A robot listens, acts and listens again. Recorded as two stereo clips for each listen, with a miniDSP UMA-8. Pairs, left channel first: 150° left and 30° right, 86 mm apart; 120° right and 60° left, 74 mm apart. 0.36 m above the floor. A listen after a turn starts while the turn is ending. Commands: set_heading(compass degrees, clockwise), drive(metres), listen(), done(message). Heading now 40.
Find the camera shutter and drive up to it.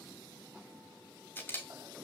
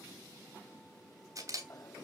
set_heading(315)
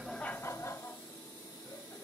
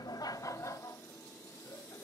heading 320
listen()
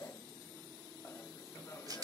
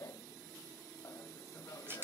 drive(1.0)
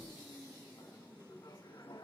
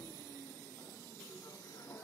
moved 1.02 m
listen()
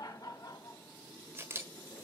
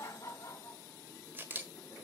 set_heading(305)
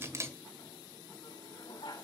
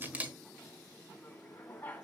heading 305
drive(1.0)
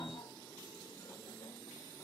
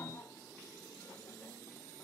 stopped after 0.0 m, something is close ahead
listen()
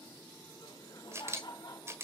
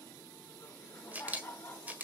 done("Arrived at the camera shutter, straight ahead.")